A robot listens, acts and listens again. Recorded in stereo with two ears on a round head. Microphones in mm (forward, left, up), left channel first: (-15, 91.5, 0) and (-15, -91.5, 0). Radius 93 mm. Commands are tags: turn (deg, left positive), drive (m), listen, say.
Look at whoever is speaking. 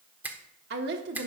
<turn deg="-55"/>
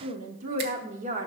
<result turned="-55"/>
<turn deg="-45"/>
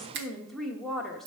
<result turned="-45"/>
<say>Facing the woman speaking.</say>